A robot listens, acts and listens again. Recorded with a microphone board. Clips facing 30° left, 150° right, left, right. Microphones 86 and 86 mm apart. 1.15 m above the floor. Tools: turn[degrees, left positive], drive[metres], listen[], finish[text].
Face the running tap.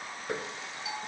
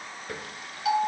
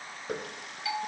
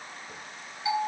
Thought: The running tap: 95° left.
Action: turn[95]
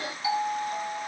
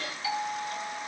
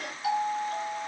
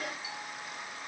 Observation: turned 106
Thought: Nothing new. It was at 10° right.
Action: turn[-10]
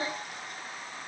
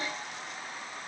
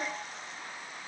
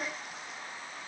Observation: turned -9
Action: listen[]
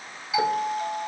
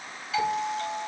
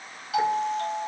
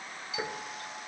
Action: finish[Facing where the running tap came from. I can't hear it now.]